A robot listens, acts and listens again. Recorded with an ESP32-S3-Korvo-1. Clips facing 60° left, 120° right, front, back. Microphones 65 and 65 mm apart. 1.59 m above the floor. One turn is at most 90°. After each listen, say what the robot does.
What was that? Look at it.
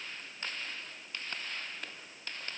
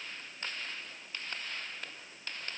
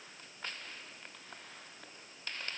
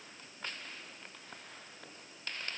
Keep listening.
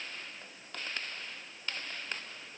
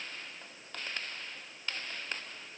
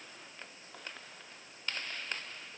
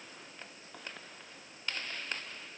Keep listening.
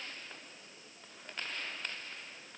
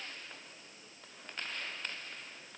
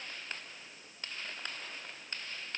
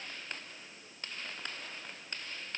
I can't make out anything.